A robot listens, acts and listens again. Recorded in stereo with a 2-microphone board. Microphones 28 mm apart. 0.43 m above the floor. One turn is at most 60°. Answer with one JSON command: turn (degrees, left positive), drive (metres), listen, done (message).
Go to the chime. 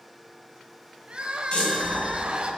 {"turn": 40}
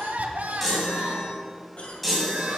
{"drive": 1.0}
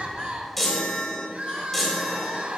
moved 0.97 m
{"drive": 1.0}
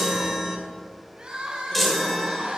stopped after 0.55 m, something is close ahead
{"done": "I am next to the chime."}